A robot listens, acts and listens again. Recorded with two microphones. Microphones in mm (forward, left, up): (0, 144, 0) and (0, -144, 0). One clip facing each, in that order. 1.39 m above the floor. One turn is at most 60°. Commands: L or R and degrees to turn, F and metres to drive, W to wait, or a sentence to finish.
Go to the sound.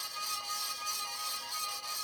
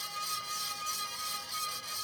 W
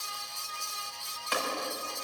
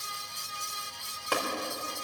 R55
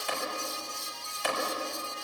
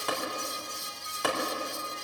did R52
R60
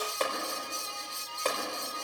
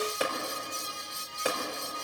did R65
R10
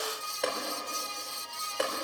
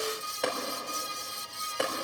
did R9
F1.0
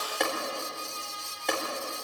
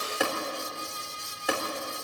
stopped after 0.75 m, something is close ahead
Blocked. The tapping is further on, straight ahead.